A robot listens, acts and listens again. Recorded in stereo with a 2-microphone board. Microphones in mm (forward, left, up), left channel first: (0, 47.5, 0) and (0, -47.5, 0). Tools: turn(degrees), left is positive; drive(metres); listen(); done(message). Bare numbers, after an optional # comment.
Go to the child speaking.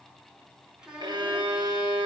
turn(-30)
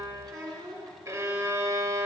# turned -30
# So it is at 135° right.
turn(-135)
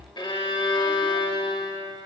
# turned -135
listen()
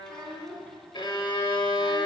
drive(1.0)
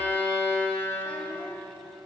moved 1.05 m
listen()
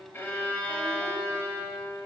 listen()
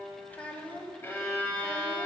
# The child speaking is now 20° left.
turn(20)
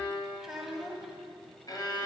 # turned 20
drive(1.0)
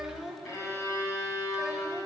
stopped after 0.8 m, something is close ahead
done("I am next to the child speaking.")